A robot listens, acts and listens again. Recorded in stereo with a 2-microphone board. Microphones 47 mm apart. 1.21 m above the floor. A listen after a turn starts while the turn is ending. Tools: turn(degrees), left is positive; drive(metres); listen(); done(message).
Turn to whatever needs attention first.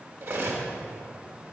listen()
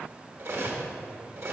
listen()
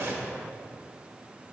done("I can't make out anything urgent to turn to.")